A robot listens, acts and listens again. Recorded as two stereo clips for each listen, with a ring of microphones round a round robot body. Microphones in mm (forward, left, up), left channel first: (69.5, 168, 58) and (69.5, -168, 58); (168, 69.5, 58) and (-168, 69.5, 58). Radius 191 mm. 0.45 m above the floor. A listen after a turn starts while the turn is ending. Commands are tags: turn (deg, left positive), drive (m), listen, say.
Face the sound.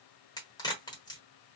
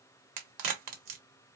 <turn deg="170"/>
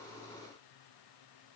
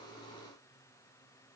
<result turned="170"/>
<say>I heard a crack from this way, but can't make it out now.</say>